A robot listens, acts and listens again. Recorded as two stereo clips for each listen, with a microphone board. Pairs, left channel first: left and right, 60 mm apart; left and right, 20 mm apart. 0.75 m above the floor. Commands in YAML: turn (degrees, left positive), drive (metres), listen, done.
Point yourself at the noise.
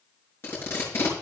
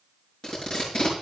turn: 40
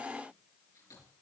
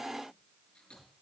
listen: true
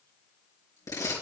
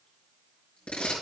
turn: 100
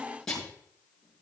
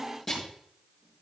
turn: 10
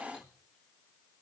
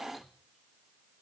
listen: true
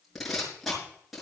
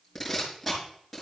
done: "Facing the tape being pulled."